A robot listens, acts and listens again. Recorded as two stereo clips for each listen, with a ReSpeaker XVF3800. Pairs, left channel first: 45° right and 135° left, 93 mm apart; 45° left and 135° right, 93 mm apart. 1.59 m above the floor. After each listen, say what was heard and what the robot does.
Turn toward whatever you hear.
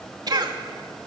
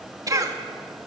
The cough: 175° left. Turn 175° left.
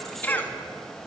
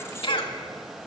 The cough is now 25° left. Turn 25° left.
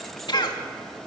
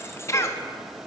The cough is now 10° right. Turn 10° right.
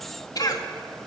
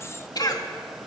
Found it: a cough, straight ahead, 2 to 4 m away.